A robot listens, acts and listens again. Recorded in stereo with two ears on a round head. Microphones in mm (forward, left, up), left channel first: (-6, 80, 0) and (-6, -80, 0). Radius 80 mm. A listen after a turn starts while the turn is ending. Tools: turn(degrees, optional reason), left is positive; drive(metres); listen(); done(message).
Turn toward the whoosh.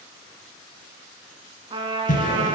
turn(degrees=45, reason="The whoosh: about 45° left or 135° left.")
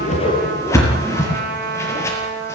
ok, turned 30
turn(degrees=15, reason="So it is at 15° left.")
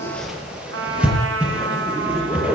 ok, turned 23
done("Found it: a whoosh, straight ahead, over 4 m away.")